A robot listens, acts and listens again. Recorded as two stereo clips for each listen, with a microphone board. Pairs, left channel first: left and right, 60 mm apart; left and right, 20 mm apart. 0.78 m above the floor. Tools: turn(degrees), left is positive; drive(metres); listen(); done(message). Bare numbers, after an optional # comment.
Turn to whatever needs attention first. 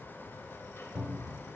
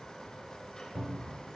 listen()
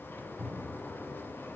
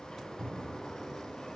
listen()
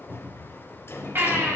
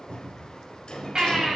# The baby crying: about 40° right or 140° right.
turn(-40)
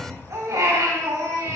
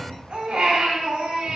# So it is at 100° right.
turn(-100)
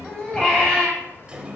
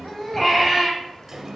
# The baby crying is now 15° left.
turn(15)
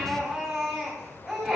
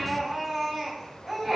done("Facing the baby crying.")